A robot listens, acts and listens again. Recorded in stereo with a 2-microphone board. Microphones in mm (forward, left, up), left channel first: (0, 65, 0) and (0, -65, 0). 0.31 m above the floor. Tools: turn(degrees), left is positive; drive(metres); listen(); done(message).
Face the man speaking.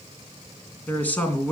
turn(degrees=30)
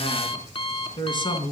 turn(degrees=140)
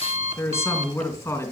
turn(degrees=25)
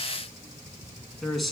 done("Facing the man speaking.")